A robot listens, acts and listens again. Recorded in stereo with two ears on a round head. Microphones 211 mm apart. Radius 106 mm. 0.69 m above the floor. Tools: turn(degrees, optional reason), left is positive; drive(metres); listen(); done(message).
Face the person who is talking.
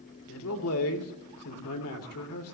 turn(degrees=70, reason="The man speaking: about 70° left or 110° left.")
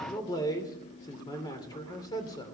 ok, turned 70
turn(degrees=20, reason="So it is at 20° left.")
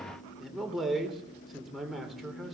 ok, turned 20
done("Found it: a man speaking, straight ahead, 2 to 4 m away.")